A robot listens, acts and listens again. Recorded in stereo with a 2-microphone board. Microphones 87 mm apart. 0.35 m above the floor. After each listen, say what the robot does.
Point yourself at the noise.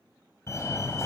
Turn 35° left.
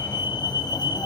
Turn 110° left.
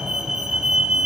Found it: a fire alarm, straight ahead.